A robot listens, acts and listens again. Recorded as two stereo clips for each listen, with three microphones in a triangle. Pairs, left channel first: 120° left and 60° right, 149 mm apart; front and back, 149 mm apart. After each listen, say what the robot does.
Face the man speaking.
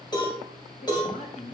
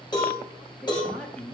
Turn 80° left.
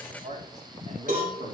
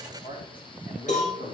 Turn 25° right.
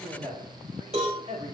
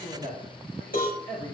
Turn 10° right.
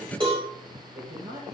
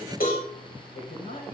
Facing the man speaking, 2 to 4 m away.